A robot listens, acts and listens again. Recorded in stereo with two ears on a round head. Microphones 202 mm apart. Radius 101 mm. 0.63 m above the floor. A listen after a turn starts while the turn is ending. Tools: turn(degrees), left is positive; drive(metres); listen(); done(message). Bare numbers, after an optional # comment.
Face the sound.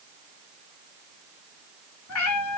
turn(90)
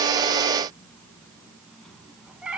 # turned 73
done("Facing the cat meowing.")